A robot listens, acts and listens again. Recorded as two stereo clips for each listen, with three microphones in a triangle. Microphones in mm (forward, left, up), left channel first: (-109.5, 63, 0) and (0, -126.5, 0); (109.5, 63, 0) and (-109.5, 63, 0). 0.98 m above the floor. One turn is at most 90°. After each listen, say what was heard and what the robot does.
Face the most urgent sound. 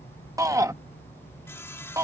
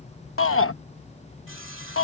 The shout: 15° left. Turn 15° left.
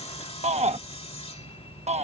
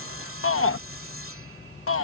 Found it: a shout, straight ahead.